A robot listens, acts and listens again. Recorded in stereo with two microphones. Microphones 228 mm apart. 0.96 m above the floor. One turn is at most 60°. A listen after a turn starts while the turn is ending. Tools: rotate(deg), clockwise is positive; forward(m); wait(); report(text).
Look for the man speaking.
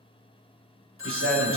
rotate(60)
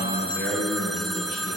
rotate(55)
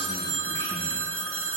wait()
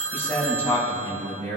rotate(-10)
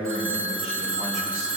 report("Found it: a man speaking, straight ahead.")